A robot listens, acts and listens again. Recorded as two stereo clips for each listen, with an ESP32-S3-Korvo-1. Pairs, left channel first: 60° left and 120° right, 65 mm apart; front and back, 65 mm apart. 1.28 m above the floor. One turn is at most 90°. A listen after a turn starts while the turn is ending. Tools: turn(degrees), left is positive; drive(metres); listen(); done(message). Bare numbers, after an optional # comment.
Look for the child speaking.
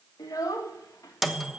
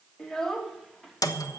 # The child speaking: 85° left.
turn(85)
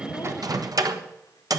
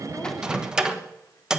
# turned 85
listen()
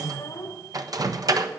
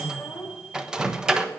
# The child speaking is now 25° left.
turn(25)
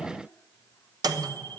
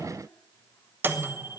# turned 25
listen()
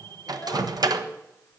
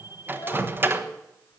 listen()
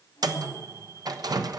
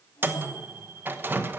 done("Facing where the child speaking came from. I can't hear it now.")